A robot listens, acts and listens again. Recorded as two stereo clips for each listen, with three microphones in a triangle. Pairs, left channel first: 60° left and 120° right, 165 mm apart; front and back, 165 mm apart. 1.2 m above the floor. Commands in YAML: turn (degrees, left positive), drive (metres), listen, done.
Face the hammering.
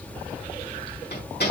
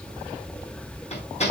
turn: 50
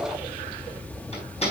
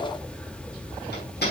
turn: 10
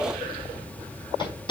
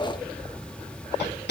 done: "Found it: hammering, straight ahead."